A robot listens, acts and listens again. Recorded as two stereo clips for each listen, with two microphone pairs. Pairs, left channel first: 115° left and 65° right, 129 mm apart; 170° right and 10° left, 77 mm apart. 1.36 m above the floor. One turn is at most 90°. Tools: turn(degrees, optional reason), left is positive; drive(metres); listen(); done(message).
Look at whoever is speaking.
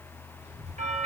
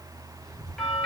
turn(degrees=-35, reason="The child speaking: 35° right.")
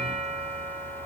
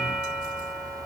listen()
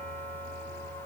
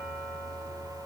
listen()
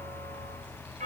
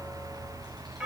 turn(degrees=-20, reason="The child speaking is now 20° right.")
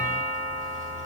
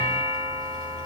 listen()
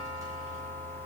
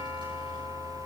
listen()
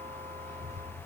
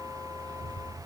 done("Found it: a child speaking, straight ahead, over 4 m away.")